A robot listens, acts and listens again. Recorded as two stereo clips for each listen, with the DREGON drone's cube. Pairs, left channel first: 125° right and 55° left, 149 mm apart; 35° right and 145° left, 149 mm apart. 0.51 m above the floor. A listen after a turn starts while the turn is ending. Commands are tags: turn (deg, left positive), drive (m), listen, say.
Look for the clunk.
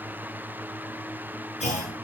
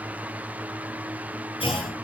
<turn deg="-85"/>
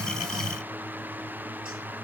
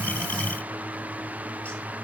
<say>Facing where the clunk came from. I can't hear it now.</say>